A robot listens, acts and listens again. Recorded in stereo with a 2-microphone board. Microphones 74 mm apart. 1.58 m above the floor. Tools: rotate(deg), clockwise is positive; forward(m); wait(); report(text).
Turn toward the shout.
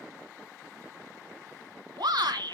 rotate(90)
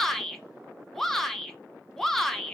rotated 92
report("Facing the shout, 1 to 2 m away.")